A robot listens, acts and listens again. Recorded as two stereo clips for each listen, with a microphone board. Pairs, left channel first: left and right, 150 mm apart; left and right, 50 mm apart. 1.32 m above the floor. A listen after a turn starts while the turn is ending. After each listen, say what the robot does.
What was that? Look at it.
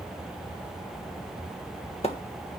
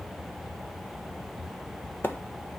Turn 45° left.
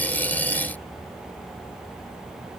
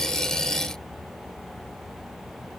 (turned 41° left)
Keep listening.
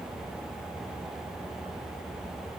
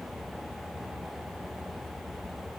I heard a splash, but can't make it out now. It was about straight ahead or 95° left.